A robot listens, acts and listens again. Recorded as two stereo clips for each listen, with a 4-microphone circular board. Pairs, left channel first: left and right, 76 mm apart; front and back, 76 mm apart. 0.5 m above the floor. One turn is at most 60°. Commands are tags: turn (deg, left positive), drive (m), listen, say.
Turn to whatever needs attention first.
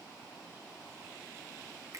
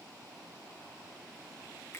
<listen/>
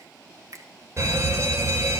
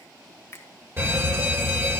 <turn deg="-60"/>
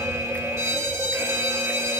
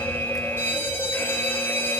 <turn deg="-55"/>
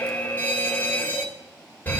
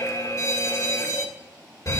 <turn deg="25"/>
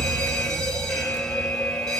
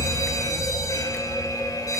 <turn deg="10"/>
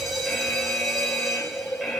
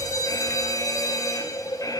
<say>Facing the fire alarm.</say>